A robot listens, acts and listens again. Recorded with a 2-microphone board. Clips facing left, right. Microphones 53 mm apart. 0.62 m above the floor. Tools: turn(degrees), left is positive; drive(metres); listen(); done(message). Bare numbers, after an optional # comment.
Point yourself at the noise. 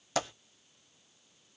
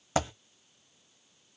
# The dropped coin: about 30° right or 150° right.
turn(-30)
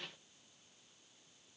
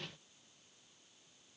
listen()
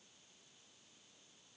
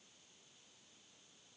done("I heard a dropped coin, but can't make it out now. It was about straight ahead or 120° right.")